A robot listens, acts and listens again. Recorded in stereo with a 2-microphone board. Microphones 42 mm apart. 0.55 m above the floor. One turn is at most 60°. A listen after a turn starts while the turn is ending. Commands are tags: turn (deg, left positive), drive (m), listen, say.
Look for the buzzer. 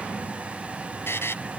<turn deg="60"/>
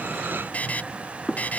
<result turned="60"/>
<turn deg="40"/>
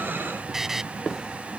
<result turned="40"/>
<turn deg="-10"/>
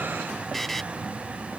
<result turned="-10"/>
<say>Found it: a buzzer, straight ahead.</say>